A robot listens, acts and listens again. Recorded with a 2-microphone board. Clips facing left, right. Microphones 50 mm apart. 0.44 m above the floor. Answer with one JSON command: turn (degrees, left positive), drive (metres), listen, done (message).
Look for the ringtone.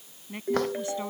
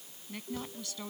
{"turn": 70}
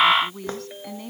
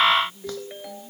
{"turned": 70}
{"done": "Facing the ringtone."}